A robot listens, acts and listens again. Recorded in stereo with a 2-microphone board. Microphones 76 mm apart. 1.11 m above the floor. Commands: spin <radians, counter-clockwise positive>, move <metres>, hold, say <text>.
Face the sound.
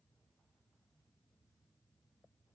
hold
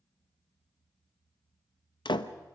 spin 1.57
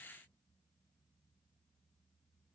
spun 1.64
say I heard a door slam from this way, but can't make it out now.